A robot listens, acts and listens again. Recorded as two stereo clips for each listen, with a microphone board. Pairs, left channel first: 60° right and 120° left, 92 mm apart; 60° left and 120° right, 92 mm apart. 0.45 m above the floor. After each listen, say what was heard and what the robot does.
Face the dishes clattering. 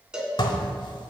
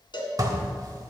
The dishes clattering: 80° right. Turn 80° right.
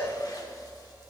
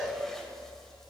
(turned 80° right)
Keep listening.
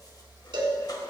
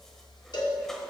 Keep listening.
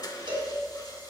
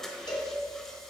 The dishes clattering is now 25° right. Turn 25° right.
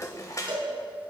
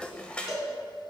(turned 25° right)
The dishes clattering is now 15° right. Turn 15° right.
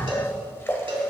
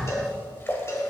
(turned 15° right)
Facing the dishes clattering, 1 to 2 m away.